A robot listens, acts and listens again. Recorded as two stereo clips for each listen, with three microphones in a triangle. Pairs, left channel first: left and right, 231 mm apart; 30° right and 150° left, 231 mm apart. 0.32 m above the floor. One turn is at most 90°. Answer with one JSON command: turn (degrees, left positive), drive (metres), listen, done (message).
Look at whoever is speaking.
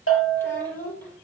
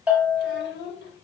{"turn": 10}
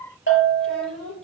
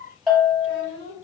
{"done": "Facing the child speaking, over 4 m away."}